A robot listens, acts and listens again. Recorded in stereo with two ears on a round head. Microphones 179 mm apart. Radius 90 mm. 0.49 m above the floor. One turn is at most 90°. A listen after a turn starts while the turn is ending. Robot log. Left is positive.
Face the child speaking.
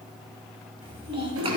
note: The child speaking: about 25° right or 155° right.
cmd yaw -25
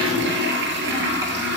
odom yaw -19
cmd idle
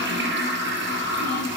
note: The child speaking: about 20° right or 160° right.
cmd yaw -20
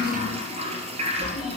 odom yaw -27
cmd idle
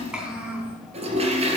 end: Facing the child speaking, 2 to 4 m away.